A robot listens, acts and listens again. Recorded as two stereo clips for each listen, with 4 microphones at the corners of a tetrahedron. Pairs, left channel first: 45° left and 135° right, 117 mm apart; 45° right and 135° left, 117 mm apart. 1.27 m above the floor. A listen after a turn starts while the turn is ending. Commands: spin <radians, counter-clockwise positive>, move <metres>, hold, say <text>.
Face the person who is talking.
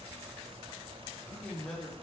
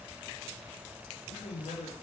spin -0.61
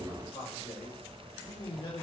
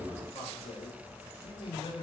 say Facing the man speaking, over 4 m away.